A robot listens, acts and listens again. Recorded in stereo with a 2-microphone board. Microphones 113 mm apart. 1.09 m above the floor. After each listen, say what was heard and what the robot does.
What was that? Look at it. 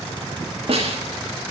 The snare drum: about 60° right or 120° right. Turn 60° right.
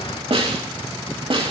So it is at 60° right. Turn 60° right.
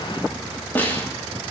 The snare drum is now 15° left. Turn 15° left.
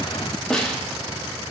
Facing the snare drum, 2 to 4 m away.